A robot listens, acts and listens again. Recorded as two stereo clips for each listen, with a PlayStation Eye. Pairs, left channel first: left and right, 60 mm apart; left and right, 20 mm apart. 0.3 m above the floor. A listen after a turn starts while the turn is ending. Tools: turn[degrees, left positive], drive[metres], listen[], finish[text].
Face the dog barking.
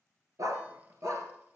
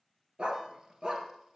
Thought: The dog barking: about 60° right or 120° right.
Action: turn[-60]
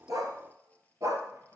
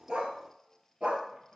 Thought: So it is at 75° right.
Action: turn[-75]
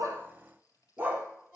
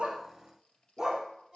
Thought: The dog barking is now 30° right.
Action: turn[-30]
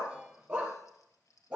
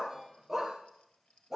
Thought: The dog barking is now 20° right.
Action: turn[-20]
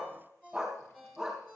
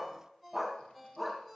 Action: finish[Found it: a dog barking, straight ahead, 2 to 4 m away.]